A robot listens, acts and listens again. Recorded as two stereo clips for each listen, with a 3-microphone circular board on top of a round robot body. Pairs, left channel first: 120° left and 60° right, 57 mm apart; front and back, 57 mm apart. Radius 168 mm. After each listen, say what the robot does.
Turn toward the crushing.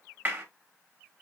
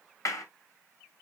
Keep listening.
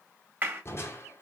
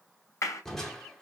Turn 85° left.
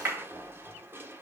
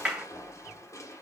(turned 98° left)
Turn 15° right.
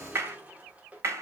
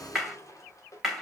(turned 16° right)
Facing the crushing, 1 to 2 m away.